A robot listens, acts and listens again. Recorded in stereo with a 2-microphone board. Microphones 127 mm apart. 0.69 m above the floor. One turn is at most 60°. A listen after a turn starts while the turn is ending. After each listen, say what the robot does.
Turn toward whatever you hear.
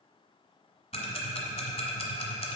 Turn 50° left.
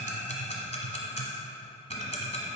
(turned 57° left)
Turn 60° left.
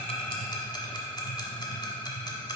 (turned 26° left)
Turn 40° left.
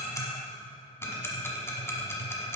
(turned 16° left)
Turn 20° left.
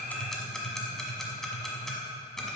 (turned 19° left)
Found it: ticking, straight ahead, 1 to 2 m away.